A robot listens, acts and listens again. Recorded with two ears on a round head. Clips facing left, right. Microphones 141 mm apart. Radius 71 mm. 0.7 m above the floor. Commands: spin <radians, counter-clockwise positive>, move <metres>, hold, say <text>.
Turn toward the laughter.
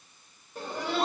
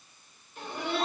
spin 0.61
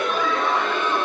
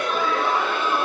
say Facing the laughter.